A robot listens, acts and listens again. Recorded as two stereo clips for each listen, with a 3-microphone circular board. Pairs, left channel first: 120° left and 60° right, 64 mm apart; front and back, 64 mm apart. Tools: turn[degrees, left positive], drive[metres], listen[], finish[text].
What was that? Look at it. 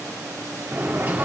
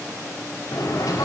Action: finish[Facing the bird.]